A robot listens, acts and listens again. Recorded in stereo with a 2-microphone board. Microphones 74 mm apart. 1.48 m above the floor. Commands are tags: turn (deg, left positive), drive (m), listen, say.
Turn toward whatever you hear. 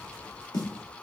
<turn deg="70"/>
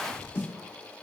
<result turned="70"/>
<turn deg="35"/>
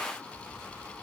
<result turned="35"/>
<listen/>
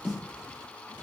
<turn deg="-15"/>
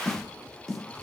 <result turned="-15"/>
<say>Facing the snare drum.</say>